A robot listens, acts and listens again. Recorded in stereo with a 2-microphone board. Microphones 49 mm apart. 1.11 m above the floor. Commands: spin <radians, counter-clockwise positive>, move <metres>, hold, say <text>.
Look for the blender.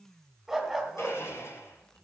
spin 1.22
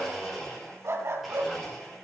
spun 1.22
say Facing the blender, over 4 m away.